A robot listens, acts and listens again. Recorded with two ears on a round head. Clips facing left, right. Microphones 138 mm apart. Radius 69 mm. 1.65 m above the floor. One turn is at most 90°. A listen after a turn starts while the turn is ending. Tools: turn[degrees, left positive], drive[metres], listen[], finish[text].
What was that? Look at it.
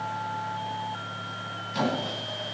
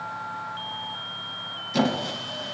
Thought: The squeak: about 60° right or 120° right.
Action: turn[-60]
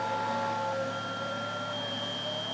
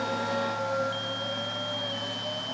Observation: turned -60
Action: listen[]
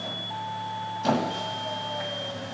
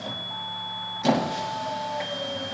Thought: So it is at 20° right.
Action: turn[-20]
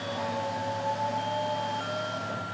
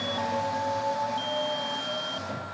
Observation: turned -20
Action: listen[]
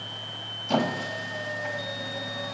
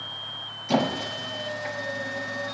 Action: finish[Facing the squeak.]